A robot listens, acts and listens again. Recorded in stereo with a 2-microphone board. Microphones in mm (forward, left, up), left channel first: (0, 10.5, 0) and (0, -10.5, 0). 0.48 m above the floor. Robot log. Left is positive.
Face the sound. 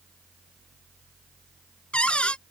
note: The cupboard door: about 65° left or 115° left.
cmd yaw +65
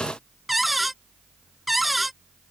end: Found it: a cupboard door, straight ahead.